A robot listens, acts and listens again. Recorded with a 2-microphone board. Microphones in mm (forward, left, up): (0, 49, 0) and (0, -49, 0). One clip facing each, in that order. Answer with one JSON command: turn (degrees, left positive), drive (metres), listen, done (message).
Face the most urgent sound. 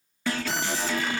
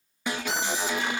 {"turn": -15}
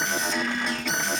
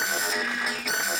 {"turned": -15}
{"done": "Facing the alarm."}